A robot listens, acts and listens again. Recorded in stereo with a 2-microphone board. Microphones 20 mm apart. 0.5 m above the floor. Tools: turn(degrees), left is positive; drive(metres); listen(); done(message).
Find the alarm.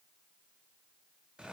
listen()
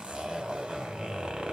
listen()
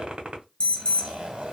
turn(degrees=55)
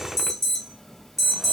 turn(degrees=20)
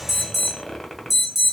done("Found it: an alarm, straight ahead, under 1 m away.")